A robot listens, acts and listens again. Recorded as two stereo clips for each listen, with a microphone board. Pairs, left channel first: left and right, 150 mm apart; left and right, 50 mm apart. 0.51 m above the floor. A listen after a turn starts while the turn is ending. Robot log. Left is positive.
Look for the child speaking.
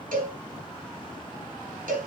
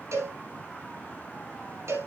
cmd idle
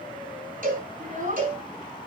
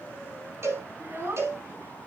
note: The child speaking: about 55° right or 125° right.
cmd yaw -55
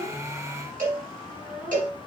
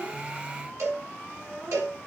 note: So it is at 60° right.
cmd yaw -60
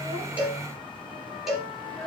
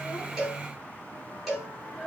end: Facing the child speaking, over 4 m away.